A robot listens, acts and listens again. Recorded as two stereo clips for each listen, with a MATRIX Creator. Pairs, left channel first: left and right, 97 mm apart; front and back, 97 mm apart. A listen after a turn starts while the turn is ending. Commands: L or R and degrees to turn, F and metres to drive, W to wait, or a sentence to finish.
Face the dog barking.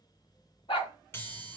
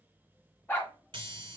L70
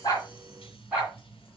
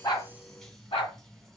R15
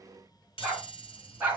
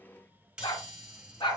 R15
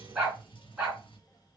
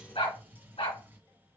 Facing the dog barking.